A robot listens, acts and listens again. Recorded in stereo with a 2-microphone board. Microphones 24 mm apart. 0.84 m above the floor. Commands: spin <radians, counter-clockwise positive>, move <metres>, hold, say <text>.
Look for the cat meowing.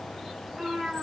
spin -0.52
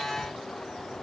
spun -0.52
hold
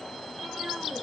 hold
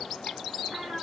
spin -2.01
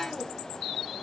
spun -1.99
hold
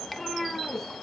say Facing the cat meowing.